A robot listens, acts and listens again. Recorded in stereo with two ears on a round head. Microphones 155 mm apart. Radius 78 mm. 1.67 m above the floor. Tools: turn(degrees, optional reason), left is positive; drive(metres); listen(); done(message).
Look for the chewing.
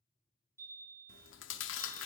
turn(degrees=90)
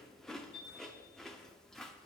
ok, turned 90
done("Facing the chewing.")